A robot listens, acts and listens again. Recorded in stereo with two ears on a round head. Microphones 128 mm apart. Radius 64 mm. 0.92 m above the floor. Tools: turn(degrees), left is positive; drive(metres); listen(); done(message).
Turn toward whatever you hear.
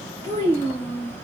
turn(degrees=20)
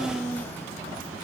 turn(degrees=30)
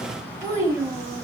turn(degrees=-20)
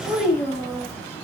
done("Found it: a child speaking, straight ahead, 1 to 2 m away.")